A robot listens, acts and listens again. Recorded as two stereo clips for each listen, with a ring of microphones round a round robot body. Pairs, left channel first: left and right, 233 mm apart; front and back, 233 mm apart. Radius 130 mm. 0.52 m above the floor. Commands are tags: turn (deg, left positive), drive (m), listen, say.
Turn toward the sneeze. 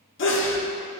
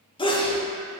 <turn deg="65"/>
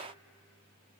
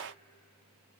<say>Facing where the sneeze came from. I can't hear it now.</say>